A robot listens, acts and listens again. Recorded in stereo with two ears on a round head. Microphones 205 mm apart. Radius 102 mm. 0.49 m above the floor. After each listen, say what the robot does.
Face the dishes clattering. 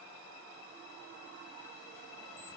Keep listening.
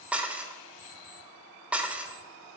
Turn 30° right.
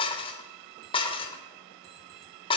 Turn 25° left.
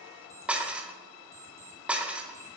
Facing the dishes clattering, under 1 m away.